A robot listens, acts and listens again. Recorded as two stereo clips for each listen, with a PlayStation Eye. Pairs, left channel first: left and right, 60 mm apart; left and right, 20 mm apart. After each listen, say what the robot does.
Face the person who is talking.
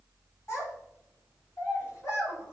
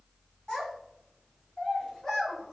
Turn 40° left.
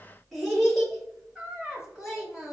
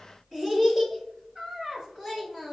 Turn 10° right.
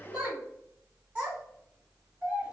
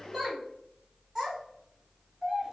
Turn 10° right.
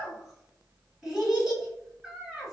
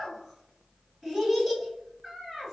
Found it: a child speaking, straight ahead, 2 to 4 m away.